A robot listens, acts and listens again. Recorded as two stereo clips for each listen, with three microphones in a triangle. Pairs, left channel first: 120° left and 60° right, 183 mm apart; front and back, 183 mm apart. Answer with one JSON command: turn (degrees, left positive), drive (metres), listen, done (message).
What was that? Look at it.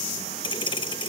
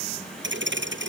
{"turn": -175}
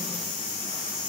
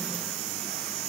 {"done": "I heard a thud from this way, but can't make it out now."}